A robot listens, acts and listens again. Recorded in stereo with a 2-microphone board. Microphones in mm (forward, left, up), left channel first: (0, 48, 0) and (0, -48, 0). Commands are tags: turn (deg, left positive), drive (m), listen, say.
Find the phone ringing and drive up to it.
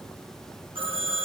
<turn deg="-65"/>
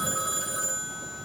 <drive m="1.0"/>
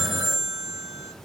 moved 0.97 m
<drive m="1.0"/>
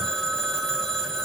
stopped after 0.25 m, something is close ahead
<say>Something is in my way. I am facing the phone ringing but have not reached it.</say>